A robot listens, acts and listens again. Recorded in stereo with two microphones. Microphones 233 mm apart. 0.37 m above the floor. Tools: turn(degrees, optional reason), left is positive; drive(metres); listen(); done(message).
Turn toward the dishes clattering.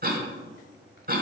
listen()
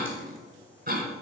listen()
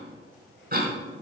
done("I can't make out dishes clattering, only a cough.")